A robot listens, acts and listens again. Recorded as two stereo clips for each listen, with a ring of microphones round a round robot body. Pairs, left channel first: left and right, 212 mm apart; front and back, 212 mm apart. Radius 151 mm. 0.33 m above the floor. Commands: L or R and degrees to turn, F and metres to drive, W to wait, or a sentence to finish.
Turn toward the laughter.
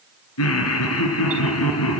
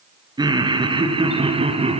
L120
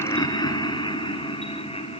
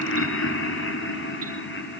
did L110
L30
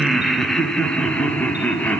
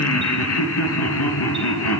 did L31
Found it: laughter, straight ahead, over 4 m away.